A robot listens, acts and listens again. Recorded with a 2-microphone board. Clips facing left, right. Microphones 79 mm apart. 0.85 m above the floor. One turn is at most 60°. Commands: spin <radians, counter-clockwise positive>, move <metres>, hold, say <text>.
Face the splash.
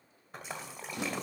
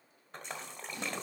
spin 0.52
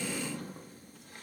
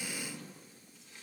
hold
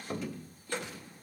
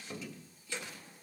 say I heard a splash, but can't make it out now. It was about 25° right or 145° left.